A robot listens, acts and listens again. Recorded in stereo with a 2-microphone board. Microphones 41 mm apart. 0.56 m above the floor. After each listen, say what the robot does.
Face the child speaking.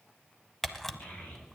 Turn 40° left.
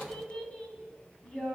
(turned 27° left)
Turn 25° left.
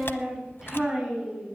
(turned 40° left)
Facing the child speaking.